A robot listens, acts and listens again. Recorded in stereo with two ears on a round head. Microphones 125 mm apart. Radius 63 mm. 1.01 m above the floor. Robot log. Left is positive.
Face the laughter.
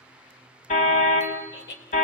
cmd yaw +90
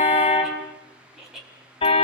end: Found it: laughter, straight ahead.